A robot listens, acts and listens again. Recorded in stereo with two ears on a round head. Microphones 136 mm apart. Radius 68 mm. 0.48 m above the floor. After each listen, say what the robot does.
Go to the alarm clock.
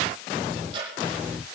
Keep listening.
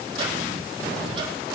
Keep listening.
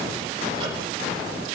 I can't make out an alarm clock, only ticking.